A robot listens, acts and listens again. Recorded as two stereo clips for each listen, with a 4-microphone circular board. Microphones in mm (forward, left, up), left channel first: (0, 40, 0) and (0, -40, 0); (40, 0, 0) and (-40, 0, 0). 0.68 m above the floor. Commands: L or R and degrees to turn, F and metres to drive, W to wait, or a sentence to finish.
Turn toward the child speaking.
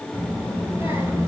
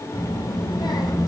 R35
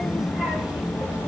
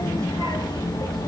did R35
R20
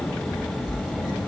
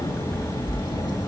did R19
R15
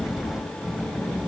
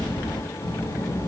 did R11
R15
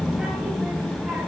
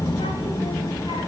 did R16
Facing the child speaking, 2 to 4 m away.